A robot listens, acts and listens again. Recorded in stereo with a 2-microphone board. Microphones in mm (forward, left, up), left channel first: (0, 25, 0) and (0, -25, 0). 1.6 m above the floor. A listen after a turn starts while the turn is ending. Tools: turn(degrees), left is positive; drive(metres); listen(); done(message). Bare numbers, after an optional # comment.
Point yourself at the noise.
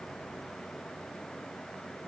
listen()
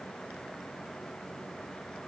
listen()
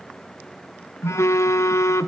# The phone buzzing: about 75° left or 105° left.
turn(75)
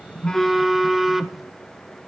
done("Facing the phone buzzing, under 1 m away.")